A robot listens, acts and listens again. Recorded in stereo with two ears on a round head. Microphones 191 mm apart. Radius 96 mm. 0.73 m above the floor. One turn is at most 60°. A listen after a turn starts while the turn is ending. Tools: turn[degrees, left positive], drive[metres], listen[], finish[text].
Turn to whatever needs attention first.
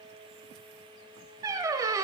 Action: listen[]
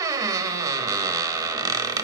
Action: listen[]
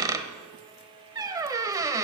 Action: finish[I can't make out anything urgent, only a squeak.]